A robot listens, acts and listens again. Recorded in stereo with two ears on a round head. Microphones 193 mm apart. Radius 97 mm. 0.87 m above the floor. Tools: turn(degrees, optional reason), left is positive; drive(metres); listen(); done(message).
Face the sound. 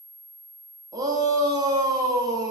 turn(degrees=-15, reason="The shout: about 15° right or 165° right.")
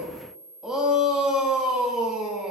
done("Facing the shout.")